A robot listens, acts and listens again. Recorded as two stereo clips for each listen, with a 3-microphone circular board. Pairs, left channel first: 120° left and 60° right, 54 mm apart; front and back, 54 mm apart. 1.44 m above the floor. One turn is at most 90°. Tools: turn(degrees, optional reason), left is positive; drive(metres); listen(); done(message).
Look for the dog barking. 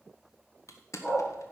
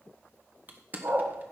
turn(degrees=90, reason="The dog barking: straight behind.")
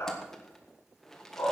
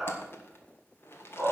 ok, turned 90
turn(degrees=90, reason="The dog barking is now 95° left.")
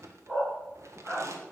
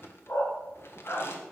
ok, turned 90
turn(degrees=20, reason="The dog barking is now 20° left.")
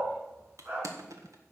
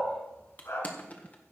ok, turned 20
done("Facing the dog barking.")